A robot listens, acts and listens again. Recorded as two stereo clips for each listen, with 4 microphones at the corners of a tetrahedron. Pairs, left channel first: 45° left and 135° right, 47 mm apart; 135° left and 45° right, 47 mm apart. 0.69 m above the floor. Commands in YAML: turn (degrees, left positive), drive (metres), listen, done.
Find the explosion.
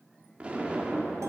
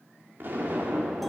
turn: -75
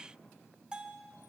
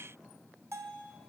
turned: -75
done: "Facing where the explosion came from. I can't hear it now."